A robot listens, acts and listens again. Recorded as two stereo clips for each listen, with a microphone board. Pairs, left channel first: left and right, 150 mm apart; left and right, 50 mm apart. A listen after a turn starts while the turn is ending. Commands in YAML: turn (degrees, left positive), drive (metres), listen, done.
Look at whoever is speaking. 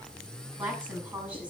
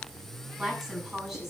turn: -30
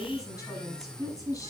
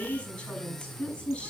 turn: 20
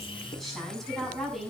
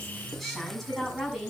done: "Facing the woman speaking."